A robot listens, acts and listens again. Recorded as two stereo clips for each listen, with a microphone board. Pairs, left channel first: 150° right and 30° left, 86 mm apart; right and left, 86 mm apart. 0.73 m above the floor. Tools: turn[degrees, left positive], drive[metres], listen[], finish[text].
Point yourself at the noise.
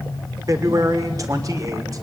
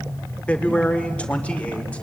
Thought: The man speaking: 15° right.
Action: turn[-15]
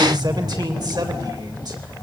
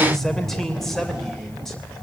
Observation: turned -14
Action: finish[Found it: a man speaking, straight ahead, 2 to 4 m away.]